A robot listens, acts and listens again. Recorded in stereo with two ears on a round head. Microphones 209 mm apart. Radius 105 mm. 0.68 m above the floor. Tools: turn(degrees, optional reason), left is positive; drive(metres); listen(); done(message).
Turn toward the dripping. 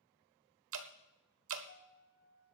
turn(degrees=-65, reason="The dripping: about 65° right or 115° right.")
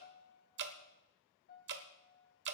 turn(degrees=-50, reason="So it is at 50° right.")
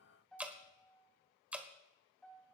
done("Facing the dripping, 1 to 2 m away.")